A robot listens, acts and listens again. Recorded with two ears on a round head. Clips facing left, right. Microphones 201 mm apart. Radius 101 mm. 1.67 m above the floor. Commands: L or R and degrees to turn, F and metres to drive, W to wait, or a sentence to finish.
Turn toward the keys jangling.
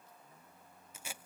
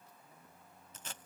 W
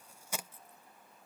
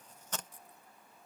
R15
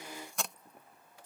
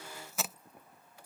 R30
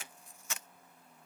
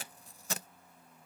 W
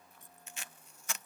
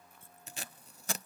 W
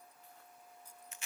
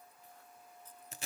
L10
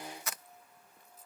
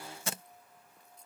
Found it: keys jangling, straight ahead.